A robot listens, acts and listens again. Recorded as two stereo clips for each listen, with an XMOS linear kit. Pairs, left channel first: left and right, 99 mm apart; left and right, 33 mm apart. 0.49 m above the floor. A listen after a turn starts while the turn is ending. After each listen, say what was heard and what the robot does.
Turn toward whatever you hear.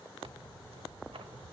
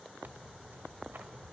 The tearing paper: about 70° right or 110° right. Turn 70° right.
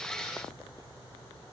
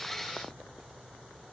Keep listening.
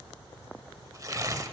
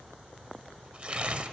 So it is at 35° right. Turn 35° right.
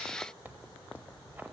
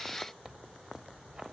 The tearing paper is now 20° right. Turn 20° right.
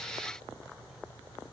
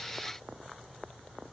Keep listening.
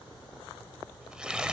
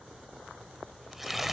The tearing paper is now 10° right. Turn 10° right.
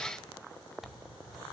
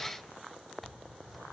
Found it: tearing paper, straight ahead.